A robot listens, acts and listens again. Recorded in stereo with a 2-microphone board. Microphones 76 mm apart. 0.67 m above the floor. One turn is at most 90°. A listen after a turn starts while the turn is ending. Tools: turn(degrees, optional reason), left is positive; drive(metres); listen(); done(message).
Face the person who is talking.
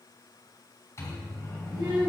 turn(degrees=-90)
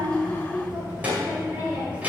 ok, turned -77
turn(degrees=-20, reason="So it is at 20° right.")
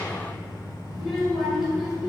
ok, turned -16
done("Facing the child speaking, 2 to 4 m away.")